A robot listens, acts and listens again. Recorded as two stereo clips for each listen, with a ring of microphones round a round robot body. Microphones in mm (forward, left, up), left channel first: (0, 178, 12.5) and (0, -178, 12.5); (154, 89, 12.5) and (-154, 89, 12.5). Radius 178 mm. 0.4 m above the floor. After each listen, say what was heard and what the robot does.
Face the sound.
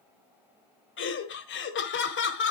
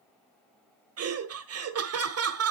The laughter: 145° left. Turn 145° left.
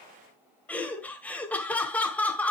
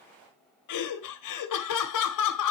Found it: laughter, straight ahead.